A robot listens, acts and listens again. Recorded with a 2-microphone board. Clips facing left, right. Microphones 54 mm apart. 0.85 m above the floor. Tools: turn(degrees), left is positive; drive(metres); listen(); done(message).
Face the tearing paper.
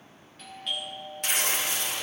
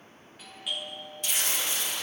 turn(degrees=55)
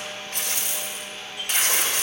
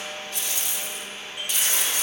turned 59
turn(degrees=60)
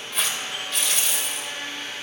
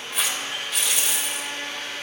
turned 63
done("Found it: tearing paper, straight ahead.")